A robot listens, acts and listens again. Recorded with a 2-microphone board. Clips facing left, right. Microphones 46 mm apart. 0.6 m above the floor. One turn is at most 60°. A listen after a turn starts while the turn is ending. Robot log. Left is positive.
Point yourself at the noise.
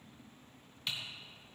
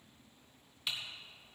cmd yaw -30
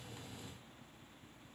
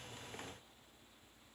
cmd idle
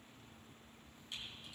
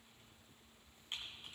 note: So it is at 145° right.
cmd yaw -60
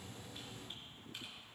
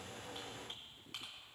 note: Nothing new. It was at 85° right.
cmd yaw -60
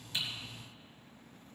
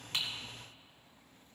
note: Nothing new. It was at 25° right.
cmd yaw -25
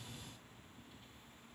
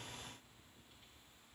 end: Facing where the typing on a keyboard came from. I can't hear it now.